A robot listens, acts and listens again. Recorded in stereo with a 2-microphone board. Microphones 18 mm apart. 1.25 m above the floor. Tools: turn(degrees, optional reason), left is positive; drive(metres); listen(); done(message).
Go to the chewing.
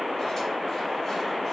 listen()
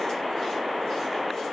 listen()
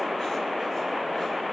done("I can't make out chewing.")